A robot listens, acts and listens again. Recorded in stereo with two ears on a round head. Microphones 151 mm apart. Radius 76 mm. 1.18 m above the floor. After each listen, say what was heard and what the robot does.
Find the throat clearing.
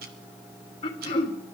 The throat clearing: about 30° left or 150° left. Turn 30° left.
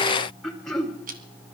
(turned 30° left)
Found it: throat clearing, straight ahead, 2 to 4 m away.